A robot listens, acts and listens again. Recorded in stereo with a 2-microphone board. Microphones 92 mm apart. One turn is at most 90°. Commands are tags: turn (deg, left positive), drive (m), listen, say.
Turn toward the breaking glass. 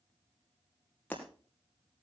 <turn deg="15"/>
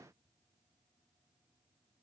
<listen/>
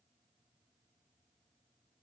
<say>I heard breaking glass, but can't make it out now. It was about straight ahead or 150° left.</say>